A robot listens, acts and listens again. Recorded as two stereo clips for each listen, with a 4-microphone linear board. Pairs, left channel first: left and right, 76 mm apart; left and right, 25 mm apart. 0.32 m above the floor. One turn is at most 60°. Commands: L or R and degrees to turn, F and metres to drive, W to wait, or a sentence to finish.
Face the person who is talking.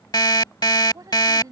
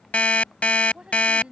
R50
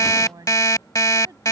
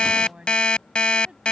R60
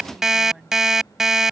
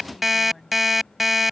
Found it: a woman speaking, straight ahead.